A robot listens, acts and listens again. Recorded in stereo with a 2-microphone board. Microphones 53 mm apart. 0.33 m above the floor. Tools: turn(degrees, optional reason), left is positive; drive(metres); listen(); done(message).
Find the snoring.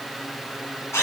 listen()
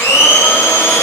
listen()
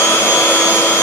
done("I can't make out snoring, only a blender.")